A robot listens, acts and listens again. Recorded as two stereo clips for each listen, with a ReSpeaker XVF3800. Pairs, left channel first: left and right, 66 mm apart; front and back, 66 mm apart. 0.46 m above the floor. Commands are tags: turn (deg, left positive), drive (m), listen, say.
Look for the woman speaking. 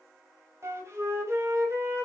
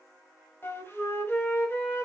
<listen/>
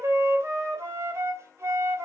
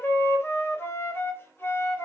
<listen/>
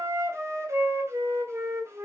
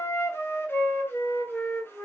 <say>I can't make out a woman speaking to turn to.</say>